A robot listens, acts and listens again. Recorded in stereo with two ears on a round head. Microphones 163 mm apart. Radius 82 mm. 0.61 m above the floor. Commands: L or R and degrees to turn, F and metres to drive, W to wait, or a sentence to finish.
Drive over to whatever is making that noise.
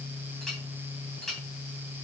L30
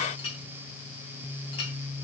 L145
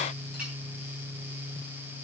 W
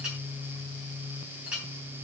F1.0
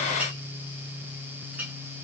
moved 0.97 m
R10
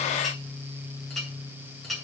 F1.0
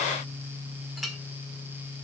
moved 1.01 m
F1.0
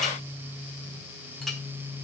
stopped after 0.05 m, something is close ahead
Arrived at the clink, straight ahead.